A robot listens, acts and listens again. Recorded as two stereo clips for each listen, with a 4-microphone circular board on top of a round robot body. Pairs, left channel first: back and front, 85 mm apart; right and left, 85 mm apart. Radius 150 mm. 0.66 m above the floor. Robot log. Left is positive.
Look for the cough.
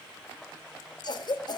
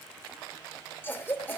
note: The cough: 155° right.
cmd yaw -155
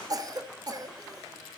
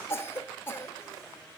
note: The cough is now 30° right.
cmd yaw -30
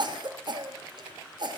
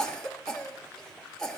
note: The cough is now 10° right.
cmd yaw -10
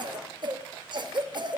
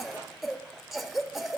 end: Found it: a cough, straight ahead.